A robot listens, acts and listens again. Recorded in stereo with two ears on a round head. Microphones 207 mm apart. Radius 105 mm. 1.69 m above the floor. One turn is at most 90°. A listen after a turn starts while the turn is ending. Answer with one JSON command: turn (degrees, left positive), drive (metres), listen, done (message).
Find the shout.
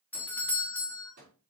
{"listen": true}
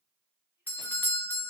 {"listen": true}
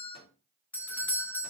{"done": "I can't make out a shout to turn to."}